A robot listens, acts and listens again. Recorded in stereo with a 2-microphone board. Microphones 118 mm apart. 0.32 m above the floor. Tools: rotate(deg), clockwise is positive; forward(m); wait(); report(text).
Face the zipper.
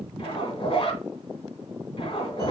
rotate(-45)
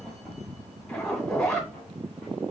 rotate(-10)
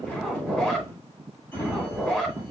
report("Facing the zipper.")